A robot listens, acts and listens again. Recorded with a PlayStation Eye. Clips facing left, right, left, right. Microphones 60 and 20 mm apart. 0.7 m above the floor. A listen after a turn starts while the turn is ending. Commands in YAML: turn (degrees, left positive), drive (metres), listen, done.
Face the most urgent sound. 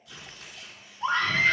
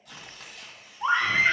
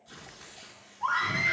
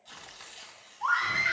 turn: -20
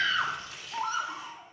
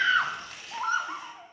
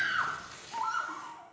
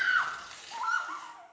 turn: -140
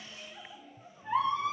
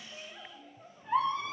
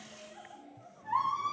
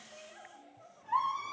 done: "Facing the scream."